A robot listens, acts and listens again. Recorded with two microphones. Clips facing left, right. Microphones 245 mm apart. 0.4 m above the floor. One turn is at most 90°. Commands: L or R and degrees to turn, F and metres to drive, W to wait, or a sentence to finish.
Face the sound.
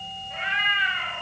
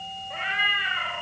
R55
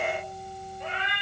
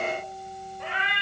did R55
R75
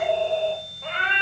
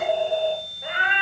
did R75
R15
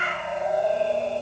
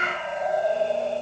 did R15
Found it: a cat meowing, straight ahead.